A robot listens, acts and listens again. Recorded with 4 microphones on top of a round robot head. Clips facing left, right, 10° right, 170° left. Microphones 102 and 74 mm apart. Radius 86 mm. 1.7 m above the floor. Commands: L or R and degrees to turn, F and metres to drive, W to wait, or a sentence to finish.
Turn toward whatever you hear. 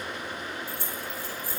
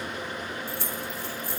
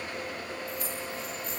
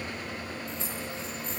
R120
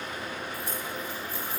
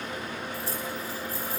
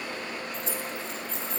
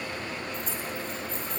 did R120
R35
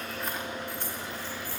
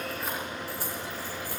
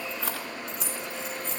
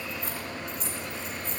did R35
R10
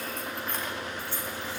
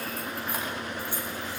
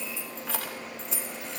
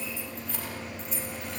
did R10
R10
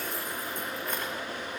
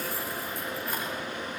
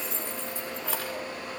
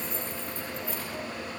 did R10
Facing the keys jangling.